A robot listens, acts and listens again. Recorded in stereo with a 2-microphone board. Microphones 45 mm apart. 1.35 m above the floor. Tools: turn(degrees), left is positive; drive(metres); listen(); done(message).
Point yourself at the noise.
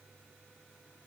listen()
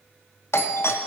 turn(degrees=65)
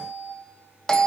turn(degrees=15)
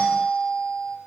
done("Facing the doorbell.")